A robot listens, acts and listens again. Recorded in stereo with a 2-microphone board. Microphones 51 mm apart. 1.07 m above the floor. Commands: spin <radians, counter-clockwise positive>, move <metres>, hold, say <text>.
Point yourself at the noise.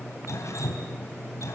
spin 1.57
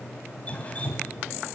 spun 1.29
spin 0.52
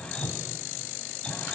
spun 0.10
spin 0.35
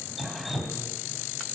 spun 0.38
say Facing the dripping, 2 to 4 m away.